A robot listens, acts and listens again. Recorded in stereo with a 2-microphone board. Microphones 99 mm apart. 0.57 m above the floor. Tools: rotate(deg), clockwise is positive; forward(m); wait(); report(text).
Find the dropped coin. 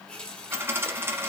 rotate(25)
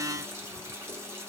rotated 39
wait()
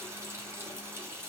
report("I heard a dropped coin, but can't make it out now. It was about 15° left or 115° right.")